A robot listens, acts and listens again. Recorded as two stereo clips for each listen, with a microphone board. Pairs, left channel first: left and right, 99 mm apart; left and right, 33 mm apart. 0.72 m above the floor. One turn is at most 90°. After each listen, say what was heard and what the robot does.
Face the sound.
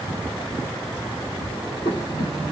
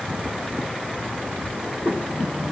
The breathing: about 60° left or 120° left. Turn 60° left.
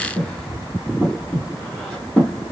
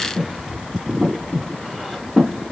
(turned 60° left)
Facing the breathing, 1 to 2 m away.